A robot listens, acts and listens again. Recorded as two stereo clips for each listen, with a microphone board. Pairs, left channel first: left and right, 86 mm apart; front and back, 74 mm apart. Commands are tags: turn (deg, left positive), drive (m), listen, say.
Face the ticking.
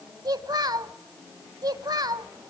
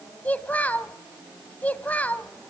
<listen/>
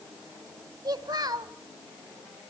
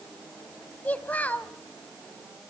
<listen/>
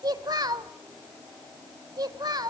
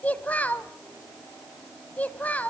<say>I can't make out ticking to turn to.</say>